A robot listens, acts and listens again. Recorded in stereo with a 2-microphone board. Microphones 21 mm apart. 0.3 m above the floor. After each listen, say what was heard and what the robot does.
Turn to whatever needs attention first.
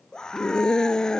The scream: about 40° left or 140° left. Turn 40° left.
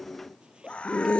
So it is at 100° left. Turn 100° left.
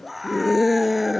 The scream is now 10° right. Turn 10° right.
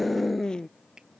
Found it: a scream, straight ahead.